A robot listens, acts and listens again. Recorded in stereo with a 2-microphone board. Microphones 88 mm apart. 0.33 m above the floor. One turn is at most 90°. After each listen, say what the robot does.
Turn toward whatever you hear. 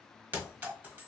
Turn 20° right.
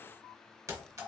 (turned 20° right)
Turn 90° right.
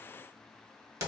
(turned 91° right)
Turn 40° right.
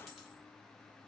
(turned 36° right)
Found it: a clink, straight ahead.